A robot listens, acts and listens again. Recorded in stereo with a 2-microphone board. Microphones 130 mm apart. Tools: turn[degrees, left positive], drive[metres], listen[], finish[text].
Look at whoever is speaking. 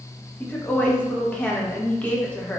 Action: turn[30]
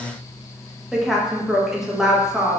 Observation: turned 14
Action: finish[Facing the woman speaking, under 1 m away.]